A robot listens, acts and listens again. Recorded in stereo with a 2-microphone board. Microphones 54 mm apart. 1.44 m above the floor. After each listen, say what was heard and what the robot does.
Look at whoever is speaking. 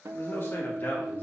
The man speaking: about 35° left or 145° left. Turn 35° left.
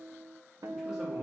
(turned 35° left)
Keep listening.
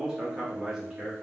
So it is at 15° right. Turn 15° right.
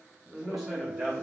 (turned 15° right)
The man speaking is now 10° right. Turn 10° right.
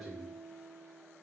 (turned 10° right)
Found it: a man speaking, straight ahead.